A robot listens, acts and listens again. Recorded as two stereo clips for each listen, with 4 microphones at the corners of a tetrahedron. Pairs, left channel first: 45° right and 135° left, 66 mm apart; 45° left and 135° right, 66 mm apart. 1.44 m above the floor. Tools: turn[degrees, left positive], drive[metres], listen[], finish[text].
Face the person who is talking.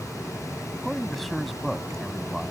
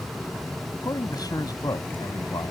Thought: The man speaking: 45° left.
Action: turn[45]
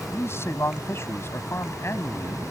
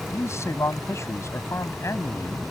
Action: finish[Facing the man speaking.]